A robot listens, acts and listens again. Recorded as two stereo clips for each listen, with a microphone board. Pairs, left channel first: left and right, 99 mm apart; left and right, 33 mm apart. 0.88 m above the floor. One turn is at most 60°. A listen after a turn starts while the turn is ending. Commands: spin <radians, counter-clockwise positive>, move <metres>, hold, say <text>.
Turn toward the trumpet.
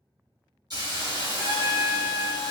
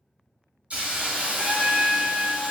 spin -0.44
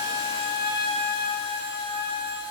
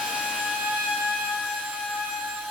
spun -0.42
say Found it: a trumpet, straight ahead.